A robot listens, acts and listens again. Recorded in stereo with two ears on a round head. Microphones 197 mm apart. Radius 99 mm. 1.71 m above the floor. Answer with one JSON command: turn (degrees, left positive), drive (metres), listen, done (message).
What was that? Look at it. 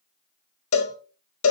{"turn": 75}
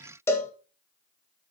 {"turn": 15}
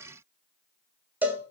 {"turn": -10}
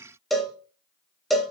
{"done": "Found it: a cowbell, straight ahead, 1 to 2 m away."}